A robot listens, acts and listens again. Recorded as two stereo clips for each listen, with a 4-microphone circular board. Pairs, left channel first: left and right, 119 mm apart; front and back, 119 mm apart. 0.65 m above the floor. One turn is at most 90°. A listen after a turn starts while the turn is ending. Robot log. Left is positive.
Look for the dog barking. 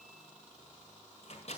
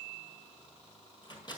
cmd idle
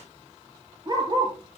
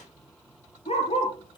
note: The dog barking: 40° right.
cmd yaw -40
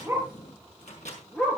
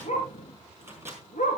end: Facing the dog barking.